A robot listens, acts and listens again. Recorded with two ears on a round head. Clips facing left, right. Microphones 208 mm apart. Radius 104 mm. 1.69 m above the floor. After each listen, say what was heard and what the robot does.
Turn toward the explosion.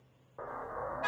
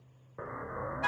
The explosion: about 30° right or 150° right. Turn 30° right.
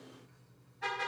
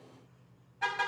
Keep listening.
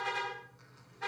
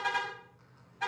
I heard an explosion, but can't make it out now. It was about straight ahead or 120° right.